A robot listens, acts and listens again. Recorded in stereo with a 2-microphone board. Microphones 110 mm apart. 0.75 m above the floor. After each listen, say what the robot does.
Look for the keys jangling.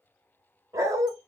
Keep listening.
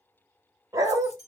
Keep listening.
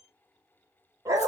I can't make out keys jangling to turn to.